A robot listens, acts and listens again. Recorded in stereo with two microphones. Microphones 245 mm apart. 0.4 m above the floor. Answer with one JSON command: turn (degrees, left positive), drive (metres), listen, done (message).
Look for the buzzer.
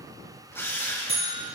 {"turn": -60}
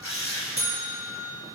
{"turn": -65}
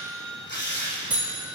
{"done": "Found it: a buzzer, straight ahead, 2 to 4 m away."}